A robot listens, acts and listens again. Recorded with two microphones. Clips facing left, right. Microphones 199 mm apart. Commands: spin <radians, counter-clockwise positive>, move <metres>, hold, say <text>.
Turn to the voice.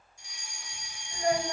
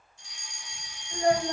spin -0.87
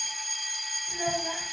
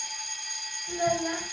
spin -1.40
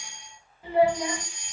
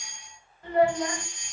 say Found it: a child speaking, straight ahead, 2 to 4 m away.